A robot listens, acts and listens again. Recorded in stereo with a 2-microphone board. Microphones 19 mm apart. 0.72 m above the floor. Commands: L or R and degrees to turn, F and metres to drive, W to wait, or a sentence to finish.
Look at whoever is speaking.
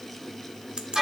W
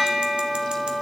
W
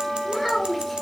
R30
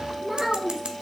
R145
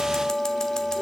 W
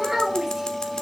R20
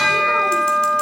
W
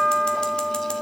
W
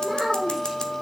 Facing the child speaking, 2 to 4 m away.